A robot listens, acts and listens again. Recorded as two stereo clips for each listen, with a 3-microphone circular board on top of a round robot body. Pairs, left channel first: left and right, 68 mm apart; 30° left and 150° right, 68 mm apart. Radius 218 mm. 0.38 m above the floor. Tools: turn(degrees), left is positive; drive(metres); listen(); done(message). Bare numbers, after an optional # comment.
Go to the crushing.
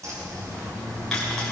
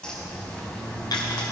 drive(1.0)
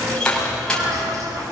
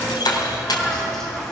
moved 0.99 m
# The crushing is now 10° left.
turn(10)
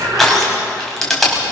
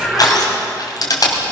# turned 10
drive(1.0)
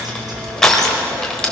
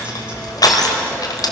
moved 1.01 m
drive(1.0)
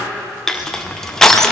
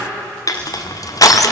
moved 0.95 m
drive(1.0)
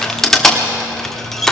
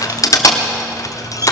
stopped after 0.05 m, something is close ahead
done("I am next to the crushing.")